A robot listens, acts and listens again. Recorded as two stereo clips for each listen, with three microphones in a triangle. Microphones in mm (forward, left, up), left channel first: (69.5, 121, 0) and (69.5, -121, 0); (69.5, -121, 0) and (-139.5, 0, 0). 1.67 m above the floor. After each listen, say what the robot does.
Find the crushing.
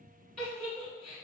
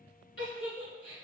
Keep listening.
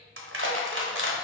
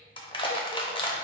Turn 95° right.
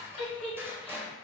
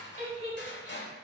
Turn 10° right.
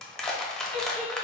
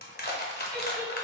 Found it: crushing, straight ahead, under 1 m away.